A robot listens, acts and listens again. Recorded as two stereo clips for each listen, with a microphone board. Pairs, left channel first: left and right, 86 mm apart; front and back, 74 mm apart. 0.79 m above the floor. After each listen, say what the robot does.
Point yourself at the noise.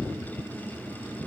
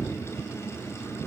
Keep listening.
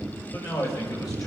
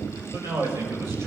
Turn 130° left.
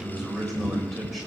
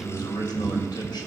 Facing the man speaking.